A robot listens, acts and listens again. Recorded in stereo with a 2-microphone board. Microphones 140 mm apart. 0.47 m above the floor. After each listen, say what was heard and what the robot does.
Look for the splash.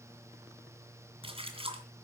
The splash: about 40° right or 140° right. Turn 40° right.
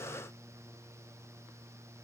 Keep listening.
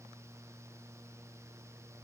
I heard a splash, but can't make it out now. It was about straight ahead or 100° right.